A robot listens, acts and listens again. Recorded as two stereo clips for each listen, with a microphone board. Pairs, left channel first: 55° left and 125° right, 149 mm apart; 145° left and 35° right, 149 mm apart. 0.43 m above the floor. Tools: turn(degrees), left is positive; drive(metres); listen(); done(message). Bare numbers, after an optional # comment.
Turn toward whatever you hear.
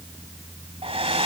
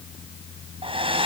# The hair dryer: 80° right.
turn(-80)
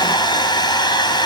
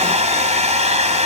done("Found it: a hair dryer, straight ahead.")